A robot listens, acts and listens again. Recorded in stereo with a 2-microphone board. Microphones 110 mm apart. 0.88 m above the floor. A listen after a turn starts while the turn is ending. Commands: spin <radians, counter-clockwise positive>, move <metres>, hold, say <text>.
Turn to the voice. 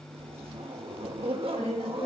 spin 1.13
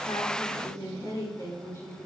spin 0.52
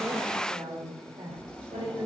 spin -0.79
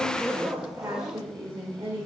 spin -0.44
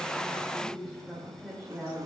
say Found it: a woman speaking, straight ahead, 2 to 4 m away.